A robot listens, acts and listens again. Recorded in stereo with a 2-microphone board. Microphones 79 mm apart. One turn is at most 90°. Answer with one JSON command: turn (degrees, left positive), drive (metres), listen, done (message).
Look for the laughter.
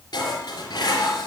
{"listen": true}
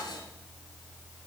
{"listen": true}
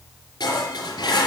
{"done": "I can't make out laughter, only dishes clattering."}